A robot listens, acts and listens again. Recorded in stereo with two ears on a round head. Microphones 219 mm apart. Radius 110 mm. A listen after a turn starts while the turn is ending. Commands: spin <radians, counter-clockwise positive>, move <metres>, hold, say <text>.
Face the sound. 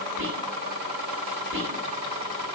spin -0.96
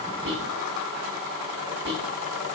spin -0.96
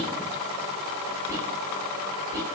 spin -0.26
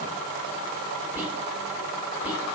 spin -0.17
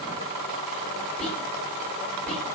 say Facing the whispering, 1 to 2 m away.